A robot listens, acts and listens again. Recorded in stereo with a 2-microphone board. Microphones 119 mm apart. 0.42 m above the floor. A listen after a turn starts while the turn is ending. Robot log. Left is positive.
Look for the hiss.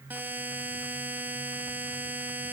cmd idle
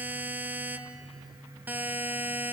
cmd idle
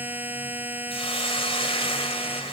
note: The hiss: about 50° left or 130° left.
cmd yaw +50
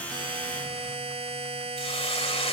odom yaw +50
note: So it is at 70° left.
cmd yaw +70
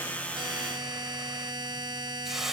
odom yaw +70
end: Facing the hiss.